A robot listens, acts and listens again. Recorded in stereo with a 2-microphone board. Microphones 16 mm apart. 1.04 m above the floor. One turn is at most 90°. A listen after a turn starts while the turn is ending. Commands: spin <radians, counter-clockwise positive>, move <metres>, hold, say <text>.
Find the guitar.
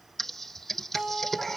spin -0.61
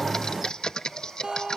spin -1.57
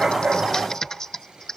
spin -0.26
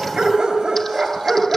hold
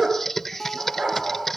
say Facing the guitar, 2 to 4 m away.